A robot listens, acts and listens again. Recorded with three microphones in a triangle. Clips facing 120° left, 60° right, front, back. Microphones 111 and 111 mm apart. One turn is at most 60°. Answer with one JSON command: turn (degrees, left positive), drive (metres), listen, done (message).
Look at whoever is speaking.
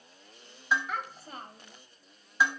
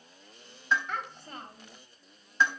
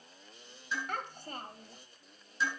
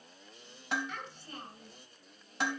{"turn": 35}
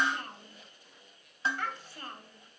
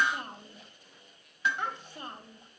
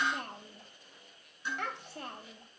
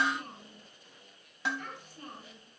{"turn": 10}
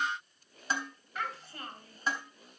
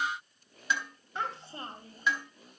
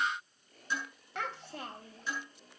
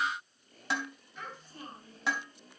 {"done": "Facing the child speaking, 2 to 4 m away."}